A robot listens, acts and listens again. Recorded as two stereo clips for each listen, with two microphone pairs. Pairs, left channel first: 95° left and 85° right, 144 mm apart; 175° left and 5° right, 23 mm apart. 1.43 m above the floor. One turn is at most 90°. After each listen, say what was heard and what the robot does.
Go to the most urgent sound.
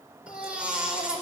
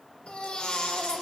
The baby crying: 165° right. Turn 90° right.
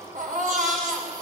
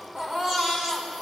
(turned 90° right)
The baby crying is now 80° right. Turn 80° right.
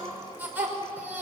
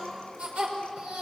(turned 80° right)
The baby crying is now 10° right. Turn 10° right.
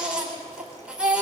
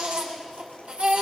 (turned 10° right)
Drive 1.0 m forward.
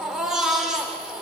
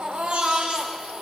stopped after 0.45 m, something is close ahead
Something is in my way. I am facing the baby crying but have not reached it.